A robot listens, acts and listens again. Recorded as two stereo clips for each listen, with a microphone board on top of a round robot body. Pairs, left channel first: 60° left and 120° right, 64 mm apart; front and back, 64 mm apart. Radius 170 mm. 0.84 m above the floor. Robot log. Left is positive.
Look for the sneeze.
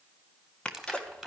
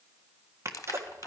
note: The sneeze: 135° left.
cmd yaw +135
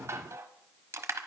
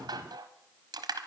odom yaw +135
end: Facing where the sneeze came from. I can't hear it now.